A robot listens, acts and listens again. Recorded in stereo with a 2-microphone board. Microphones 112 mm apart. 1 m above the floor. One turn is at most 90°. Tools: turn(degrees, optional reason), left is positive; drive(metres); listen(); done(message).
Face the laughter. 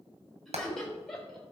turn(degrees=30)
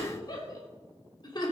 turn(degrees=90, reason="So it is at 140° left.")
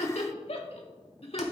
turn(degrees=60, reason="The laughter is now 60° left.")
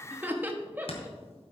turn(degrees=-15, reason="The laughter is now 15° right.")
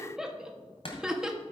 done("Facing the laughter.")